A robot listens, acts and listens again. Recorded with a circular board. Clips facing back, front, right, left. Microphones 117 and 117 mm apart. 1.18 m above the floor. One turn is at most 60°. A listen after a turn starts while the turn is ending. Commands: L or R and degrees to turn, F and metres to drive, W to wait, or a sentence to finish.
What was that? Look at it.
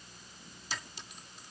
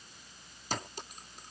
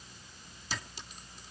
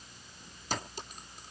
L45
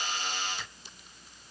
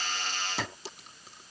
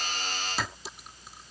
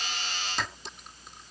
Found it: a clink, straight ahead.